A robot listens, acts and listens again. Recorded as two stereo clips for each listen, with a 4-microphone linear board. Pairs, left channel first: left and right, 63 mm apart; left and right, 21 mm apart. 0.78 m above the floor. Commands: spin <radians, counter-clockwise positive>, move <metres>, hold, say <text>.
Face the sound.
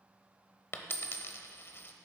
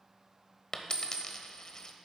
spin 0.70
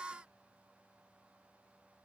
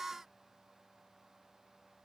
hold
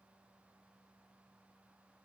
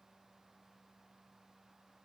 say I heard a dropped coin, but can't make it out now. It was about straight ahead or 100° left.